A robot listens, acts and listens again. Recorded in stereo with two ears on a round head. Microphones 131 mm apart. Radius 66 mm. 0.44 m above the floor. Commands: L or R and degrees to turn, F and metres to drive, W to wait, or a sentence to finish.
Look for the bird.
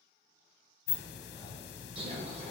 R40
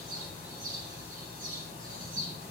R90
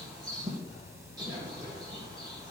R30
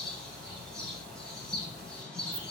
Facing the bird.